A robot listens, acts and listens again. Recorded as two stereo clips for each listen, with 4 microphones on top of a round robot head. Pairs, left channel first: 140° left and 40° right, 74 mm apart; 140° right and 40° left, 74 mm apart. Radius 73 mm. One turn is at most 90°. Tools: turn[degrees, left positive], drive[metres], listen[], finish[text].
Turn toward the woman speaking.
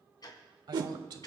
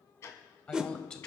Thought: The woman speaking: 60° right.
Action: turn[-60]
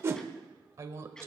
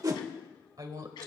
Thought: The woman speaking is now 10° left.
Action: turn[10]
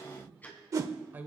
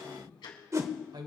Thought: The woman speaking is now 25° left.
Action: turn[25]
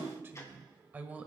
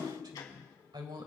Thought: The woman speaking is now 30° left.
Action: turn[30]
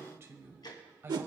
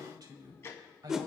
Thought: The woman speaking is now 15° left.
Action: turn[15]
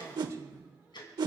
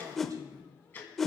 Action: finish[Found it: a woman speaking, straight ahead, 1 to 2 m away.]